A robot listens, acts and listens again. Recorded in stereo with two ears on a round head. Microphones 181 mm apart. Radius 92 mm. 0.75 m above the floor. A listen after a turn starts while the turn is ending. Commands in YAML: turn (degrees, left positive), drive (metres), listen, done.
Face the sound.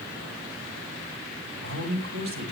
turn: -90
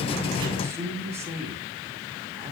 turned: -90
turn: -15
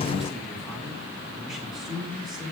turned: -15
done: "Facing the man speaking."